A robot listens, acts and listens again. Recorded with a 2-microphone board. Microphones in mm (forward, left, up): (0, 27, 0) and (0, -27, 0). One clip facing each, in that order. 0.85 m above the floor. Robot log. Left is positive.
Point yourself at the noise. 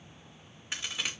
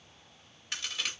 note: The crack: about 15° left or 165° left.
cmd yaw +15
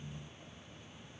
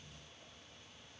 cmd idle
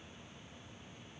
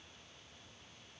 end: I heard a crack, but can't make it out now. It was about straight ahead or 150° left.